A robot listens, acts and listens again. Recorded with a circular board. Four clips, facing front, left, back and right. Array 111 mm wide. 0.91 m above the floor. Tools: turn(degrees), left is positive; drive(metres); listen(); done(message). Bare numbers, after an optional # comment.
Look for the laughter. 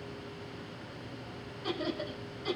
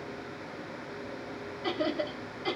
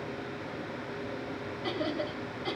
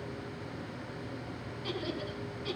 # The laughter: 105° left.
turn(105)
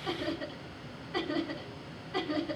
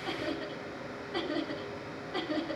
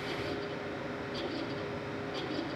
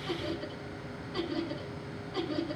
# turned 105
# The laughter is now 30° left.
turn(30)
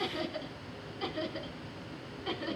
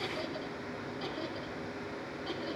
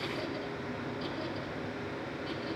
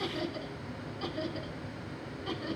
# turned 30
done("Found it: laughter, straight ahead.")